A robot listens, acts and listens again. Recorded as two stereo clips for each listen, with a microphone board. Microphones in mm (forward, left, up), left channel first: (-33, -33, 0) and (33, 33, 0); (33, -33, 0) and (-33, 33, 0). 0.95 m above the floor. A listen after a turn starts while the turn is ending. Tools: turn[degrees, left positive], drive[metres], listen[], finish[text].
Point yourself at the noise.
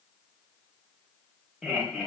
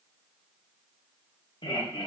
Thought: The laughter: 40° right.
Action: turn[-40]
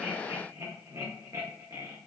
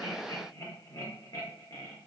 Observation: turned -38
Action: finish[Found it: laughter, straight ahead, 1 to 2 m away.]